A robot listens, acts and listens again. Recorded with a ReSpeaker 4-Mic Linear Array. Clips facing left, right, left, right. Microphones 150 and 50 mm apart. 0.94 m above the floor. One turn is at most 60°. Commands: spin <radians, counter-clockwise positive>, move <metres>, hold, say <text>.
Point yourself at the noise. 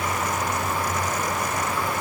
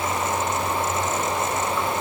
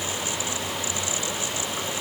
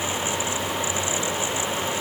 hold
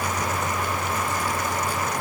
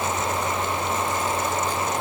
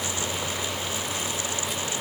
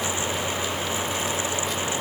hold
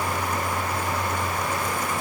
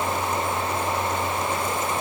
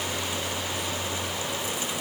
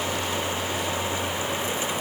say I can't make out anything to turn to.